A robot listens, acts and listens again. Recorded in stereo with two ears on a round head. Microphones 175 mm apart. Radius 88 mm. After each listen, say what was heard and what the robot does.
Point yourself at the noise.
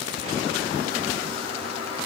Keep listening.
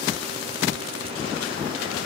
Keep listening.
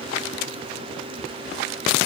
I can't make out anything.